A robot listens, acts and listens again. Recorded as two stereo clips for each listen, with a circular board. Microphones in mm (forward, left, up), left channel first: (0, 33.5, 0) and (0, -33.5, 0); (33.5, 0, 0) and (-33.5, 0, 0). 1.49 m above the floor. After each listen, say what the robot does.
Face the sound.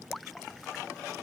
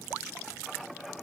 Keep listening.
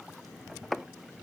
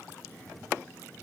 Keep listening.
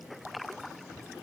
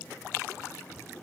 I can't make out anything to turn to.